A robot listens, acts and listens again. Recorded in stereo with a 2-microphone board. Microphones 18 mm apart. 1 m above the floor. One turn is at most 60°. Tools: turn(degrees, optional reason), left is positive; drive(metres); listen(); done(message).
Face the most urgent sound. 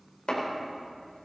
listen()
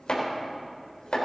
listen()
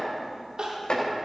turn(degrees=-60, reason="The crying: about 75° right or 105° right.")
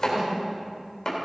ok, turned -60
listen()
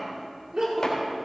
turn(degrees=-45, reason="So it is at 45° right.")
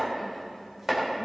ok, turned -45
listen()
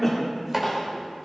turn(degrees=10, reason="The crying is now 10° left.")
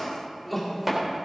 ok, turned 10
done("Facing the crying, 2 to 4 m away.")